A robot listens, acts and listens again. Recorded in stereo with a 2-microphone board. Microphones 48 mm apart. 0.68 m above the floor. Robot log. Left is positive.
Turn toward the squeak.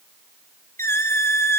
note: The squeak: about 65° left or 115° left.
cmd yaw +65
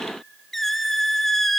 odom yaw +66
end: Found it: a squeak, straight ahead.